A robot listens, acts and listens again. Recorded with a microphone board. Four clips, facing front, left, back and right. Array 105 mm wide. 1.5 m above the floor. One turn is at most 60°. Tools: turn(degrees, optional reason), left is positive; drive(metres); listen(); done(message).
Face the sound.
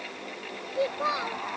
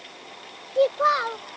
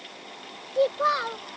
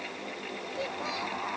turn(degrees=60, reason="The child speaking: 105° left.")
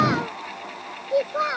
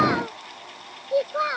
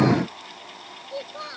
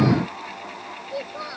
turn(degrees=40, reason="The child speaking is now 40° left.")
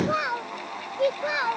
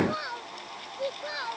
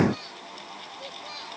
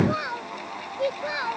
turn(degrees=-15, reason="The child speaking is now 15° right.")
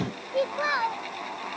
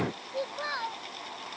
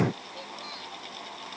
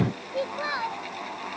turn(degrees=-10, reason="The child speaking is now 10° right.")
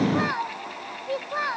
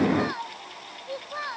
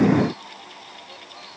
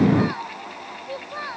done("Facing the child speaking.")